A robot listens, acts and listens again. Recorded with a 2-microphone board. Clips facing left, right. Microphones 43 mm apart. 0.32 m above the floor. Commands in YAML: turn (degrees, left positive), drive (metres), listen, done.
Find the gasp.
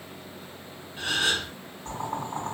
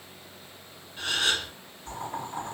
turn: 20
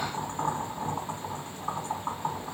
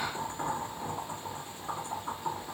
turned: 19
listen: true
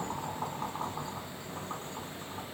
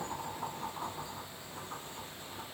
done: "I heard a gasp, but can't make it out now. It was about straight ahead or 140° left."